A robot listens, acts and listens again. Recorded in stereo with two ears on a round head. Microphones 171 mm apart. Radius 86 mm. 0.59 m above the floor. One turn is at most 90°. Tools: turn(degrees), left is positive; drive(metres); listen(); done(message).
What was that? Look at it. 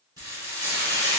turn(degrees=-20)
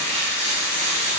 turn(degrees=-90)
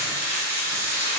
turn(degrees=-50)
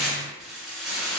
done("Found it: frying, straight ahead, 1 to 2 m away.")